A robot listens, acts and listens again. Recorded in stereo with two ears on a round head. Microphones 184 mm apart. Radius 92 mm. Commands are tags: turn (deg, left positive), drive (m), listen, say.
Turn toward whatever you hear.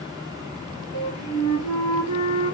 <turn deg="90"/>
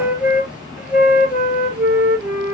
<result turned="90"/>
<say>Facing the flute.</say>